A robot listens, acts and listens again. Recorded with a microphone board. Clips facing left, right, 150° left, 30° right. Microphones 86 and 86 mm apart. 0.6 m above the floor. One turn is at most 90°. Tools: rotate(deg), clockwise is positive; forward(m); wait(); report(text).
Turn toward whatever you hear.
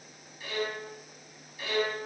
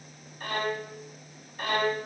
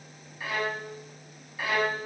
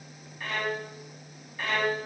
rotate(90)
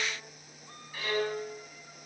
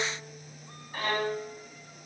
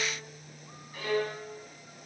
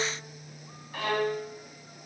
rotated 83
rotate(45)
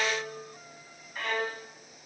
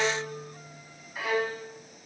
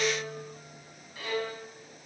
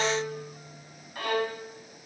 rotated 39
report("Facing the violin, 2 to 4 m away.")